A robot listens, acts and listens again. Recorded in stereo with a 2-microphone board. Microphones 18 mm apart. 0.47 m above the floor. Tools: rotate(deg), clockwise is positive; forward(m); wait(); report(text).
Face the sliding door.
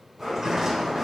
rotate(35)
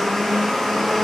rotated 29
wait()
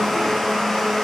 wait()
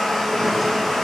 report("I heard a sliding door, but can't make it out now. It was about 5° right or 120° right.")